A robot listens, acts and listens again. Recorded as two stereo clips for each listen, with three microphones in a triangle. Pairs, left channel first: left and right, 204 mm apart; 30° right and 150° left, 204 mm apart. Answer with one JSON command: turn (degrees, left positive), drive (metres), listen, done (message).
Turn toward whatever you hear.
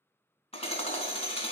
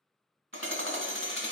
{"turn": 150}
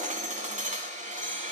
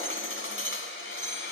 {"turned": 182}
{"turn": -35}
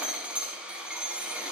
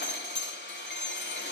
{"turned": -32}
{"done": "Found it: hammering, straight ahead, 1 to 2 m away."}